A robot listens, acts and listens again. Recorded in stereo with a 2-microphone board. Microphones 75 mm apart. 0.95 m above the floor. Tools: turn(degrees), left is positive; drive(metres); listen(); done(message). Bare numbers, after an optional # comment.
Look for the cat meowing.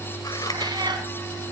turn(-90)
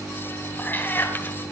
# So it is at 30° left.
turn(30)
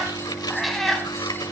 done("Found it: a cat meowing, straight ahead, 2 to 4 m away.")